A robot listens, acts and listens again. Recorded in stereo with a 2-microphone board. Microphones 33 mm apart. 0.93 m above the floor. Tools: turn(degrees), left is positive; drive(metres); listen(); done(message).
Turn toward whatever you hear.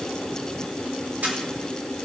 turn(degrees=-55)
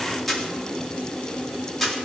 done("Found it: a camera shutter, straight ahead.")